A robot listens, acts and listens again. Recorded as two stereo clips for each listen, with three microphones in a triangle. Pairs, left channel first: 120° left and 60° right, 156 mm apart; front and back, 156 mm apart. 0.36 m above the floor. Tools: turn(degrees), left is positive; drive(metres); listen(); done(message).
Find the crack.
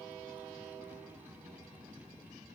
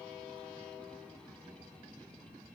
listen()
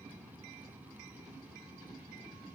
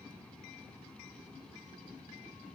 listen()
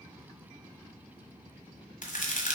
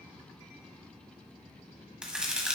turn(degrees=95)
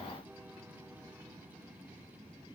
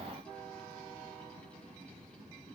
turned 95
done("I heard a crack from this way, but can't make it out now.")